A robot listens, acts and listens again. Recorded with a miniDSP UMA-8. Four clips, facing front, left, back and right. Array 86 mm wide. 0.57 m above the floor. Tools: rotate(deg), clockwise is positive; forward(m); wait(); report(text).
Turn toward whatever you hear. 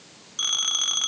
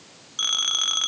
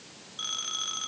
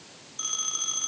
rotate(-75)
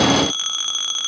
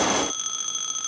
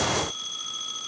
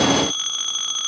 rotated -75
rotate(10)
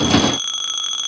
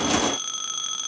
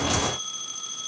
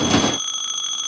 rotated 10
report("Found it: a phone ringing, straight ahead, 2 to 4 m away.")